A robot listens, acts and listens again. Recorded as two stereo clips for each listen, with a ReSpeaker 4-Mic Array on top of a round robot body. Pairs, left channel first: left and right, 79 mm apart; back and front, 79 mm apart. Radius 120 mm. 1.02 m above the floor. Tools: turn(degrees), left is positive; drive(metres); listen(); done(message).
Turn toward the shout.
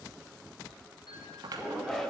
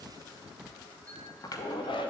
turn(degrees=175)
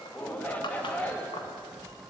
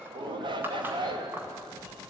turn(degrees=15)
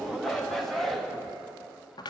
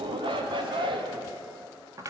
done("Facing the shout, 1 to 2 m away.")